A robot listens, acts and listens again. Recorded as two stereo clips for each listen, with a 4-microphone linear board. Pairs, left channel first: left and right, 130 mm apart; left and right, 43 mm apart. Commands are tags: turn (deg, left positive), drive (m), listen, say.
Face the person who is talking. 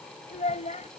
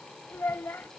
<turn deg="65"/>
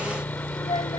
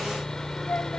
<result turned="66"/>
<turn deg="50"/>
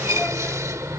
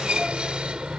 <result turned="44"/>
<listen/>
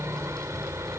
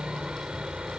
<listen/>
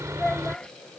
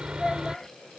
<say>Found it: a child speaking, straight ahead.</say>